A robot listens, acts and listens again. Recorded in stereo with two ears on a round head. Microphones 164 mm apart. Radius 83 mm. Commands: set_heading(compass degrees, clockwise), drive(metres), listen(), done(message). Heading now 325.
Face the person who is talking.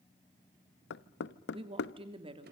set_heading(355)
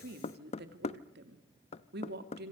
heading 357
set_heading(112)
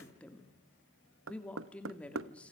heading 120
done("Facing the woman speaking.")